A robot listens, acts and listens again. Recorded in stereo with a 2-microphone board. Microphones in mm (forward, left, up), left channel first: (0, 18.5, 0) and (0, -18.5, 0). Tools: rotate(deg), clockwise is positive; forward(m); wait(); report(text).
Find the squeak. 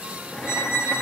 rotate(-90)
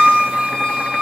report("Facing the squeak, 2 to 4 m away.")